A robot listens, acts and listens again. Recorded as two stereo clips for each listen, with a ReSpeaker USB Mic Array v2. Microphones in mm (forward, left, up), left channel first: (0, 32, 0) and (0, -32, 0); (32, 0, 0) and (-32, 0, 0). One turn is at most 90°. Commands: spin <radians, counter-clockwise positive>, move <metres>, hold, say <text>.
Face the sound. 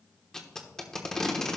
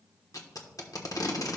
spin 0.17
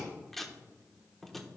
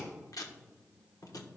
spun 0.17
say Facing the tape being pulled, 1 to 2 m away.